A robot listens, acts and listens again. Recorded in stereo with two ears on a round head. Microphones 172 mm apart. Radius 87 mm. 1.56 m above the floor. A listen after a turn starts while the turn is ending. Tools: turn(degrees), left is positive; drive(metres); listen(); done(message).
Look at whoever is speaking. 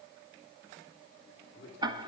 turn(degrees=65)
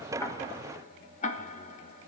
listen()
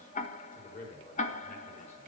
turn(degrees=40)
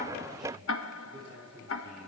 turn(degrees=-10)
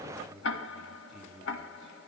done("Facing the man speaking.")